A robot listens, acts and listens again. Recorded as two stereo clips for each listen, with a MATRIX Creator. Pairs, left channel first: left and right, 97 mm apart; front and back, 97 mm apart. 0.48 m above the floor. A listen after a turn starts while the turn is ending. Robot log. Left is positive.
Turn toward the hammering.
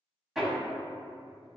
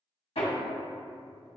end: Found it: hammering, straight ahead.